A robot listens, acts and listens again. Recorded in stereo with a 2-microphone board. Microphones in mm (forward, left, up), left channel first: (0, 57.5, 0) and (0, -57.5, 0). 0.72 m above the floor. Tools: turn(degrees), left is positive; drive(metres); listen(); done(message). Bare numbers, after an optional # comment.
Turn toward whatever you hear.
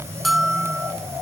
turn(30)
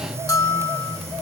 # So it is at 150° left.
turn(150)
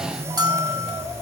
# The bell is now 35° right.
turn(-35)
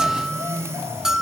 done("Found it: a bell, straight ahead, 1 to 2 m away.")